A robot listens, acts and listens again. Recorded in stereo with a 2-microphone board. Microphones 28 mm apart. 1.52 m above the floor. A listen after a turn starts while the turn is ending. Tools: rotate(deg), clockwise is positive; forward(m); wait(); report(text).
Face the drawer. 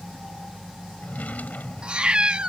rotate(-90)
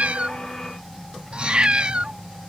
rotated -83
wait()
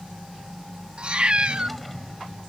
wait()
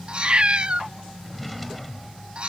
report("Found it: a drawer, straight ahead.")